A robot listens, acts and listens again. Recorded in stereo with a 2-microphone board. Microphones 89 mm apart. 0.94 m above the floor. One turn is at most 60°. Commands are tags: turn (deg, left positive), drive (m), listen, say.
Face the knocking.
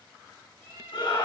<listen/>
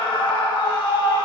<listen/>
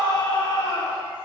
<say>I can't make out knocking, only a cat meowing and a scream.</say>